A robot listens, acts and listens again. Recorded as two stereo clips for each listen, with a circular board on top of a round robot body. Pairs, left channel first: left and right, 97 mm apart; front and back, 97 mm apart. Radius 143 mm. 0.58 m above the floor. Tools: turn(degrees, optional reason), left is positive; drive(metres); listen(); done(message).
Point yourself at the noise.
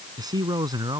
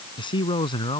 turn(degrees=-40, reason="The man speaking: 40° right.")
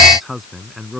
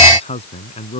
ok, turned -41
done("Found it: a man speaking, straight ahead.")